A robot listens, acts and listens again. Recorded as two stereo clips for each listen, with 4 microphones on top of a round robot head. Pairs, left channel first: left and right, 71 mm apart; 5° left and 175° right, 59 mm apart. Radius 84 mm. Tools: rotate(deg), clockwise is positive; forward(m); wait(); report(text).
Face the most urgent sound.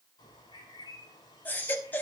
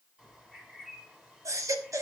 rotate(-155)
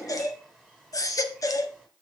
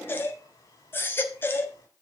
rotate(-55)
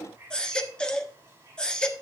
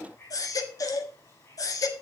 rotate(-10)
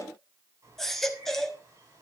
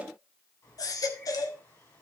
report("Found it: a baby crying, straight ahead.")